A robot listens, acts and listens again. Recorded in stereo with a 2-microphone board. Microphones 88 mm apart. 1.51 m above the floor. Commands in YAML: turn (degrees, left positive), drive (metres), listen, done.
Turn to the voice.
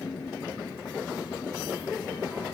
listen: true
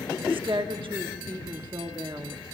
turn: -75
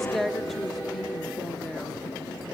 done: "Found it: a woman speaking, straight ahead."